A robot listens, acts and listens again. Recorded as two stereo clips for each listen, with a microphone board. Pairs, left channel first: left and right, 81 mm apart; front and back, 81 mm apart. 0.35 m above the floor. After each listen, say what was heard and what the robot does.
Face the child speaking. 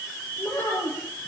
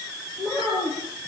The child speaking: 30° left. Turn 30° left.
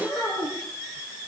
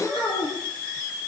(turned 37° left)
Found it: a child speaking, straight ahead, over 4 m away.